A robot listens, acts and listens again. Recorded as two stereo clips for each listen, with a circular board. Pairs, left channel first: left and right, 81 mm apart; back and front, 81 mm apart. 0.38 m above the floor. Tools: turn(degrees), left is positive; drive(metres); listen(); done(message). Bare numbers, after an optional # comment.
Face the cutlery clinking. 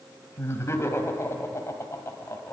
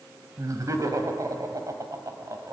listen()
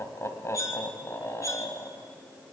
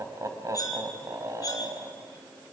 # The cutlery clinking: 135° left.
turn(135)
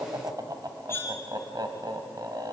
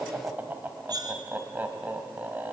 # The cutlery clinking is now 30° left.
turn(30)
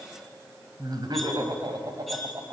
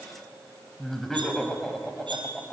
listen()
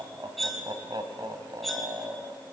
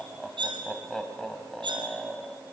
done("Facing the cutlery clinking.")